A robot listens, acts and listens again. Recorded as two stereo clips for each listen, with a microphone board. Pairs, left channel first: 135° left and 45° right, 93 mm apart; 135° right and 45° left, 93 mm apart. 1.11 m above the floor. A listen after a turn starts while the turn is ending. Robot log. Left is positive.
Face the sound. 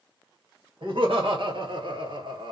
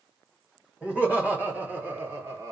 note: The laughter: 15° right.
cmd yaw -15
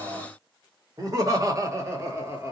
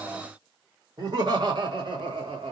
note: The laughter is now 20° left.
cmd yaw +20
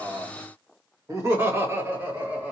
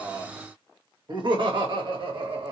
note: The laughter is now 25° left.
cmd yaw +25
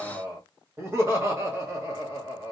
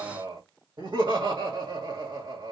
note: The laughter is now 15° left.
cmd yaw +15
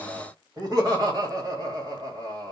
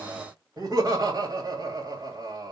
end: Facing the laughter, 1 to 2 m away.